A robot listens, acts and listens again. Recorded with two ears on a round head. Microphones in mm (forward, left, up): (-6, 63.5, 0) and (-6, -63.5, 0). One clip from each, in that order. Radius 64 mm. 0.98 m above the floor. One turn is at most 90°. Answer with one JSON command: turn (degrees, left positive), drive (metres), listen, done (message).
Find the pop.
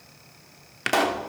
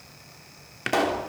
{"turn": 25}
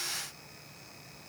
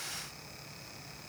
{"listen": true}
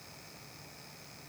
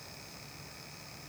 {"done": "I heard a pop, but can't make it out now. It was about straight ahead or 130° left."}